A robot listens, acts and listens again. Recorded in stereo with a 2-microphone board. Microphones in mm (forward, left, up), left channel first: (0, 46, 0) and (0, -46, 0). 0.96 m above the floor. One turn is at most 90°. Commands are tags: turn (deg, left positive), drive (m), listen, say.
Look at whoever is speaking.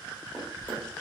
<listen/>
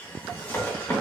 <listen/>
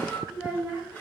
<turn deg="-15"/>
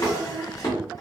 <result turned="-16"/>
<say>Found it: a child speaking, straight ahead.</say>